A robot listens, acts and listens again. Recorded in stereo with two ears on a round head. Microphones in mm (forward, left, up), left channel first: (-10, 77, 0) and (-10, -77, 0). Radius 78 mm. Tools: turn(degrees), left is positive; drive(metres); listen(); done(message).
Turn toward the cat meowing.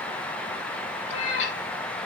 turn(degrees=40)
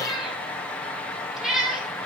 done("Found it: a cat meowing, straight ahead, over 4 m away.")